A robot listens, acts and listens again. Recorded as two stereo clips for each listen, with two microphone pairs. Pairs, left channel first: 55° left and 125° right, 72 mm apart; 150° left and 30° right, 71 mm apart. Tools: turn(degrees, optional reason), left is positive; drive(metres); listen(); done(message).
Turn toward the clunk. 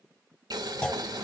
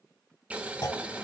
turn(degrees=130, reason="The clunk: 130° left.")
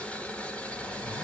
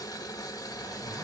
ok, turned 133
done("I heard a clunk from this way, but can't make it out now.")